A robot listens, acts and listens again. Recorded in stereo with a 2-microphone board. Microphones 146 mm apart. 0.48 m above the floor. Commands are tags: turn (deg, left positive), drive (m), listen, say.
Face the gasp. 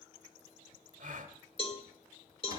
<turn deg="-60"/>
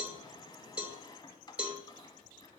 <listen/>
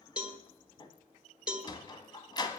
<say>I heard a gasp, but can't make it out now. It was about straight ahead or 60° right.</say>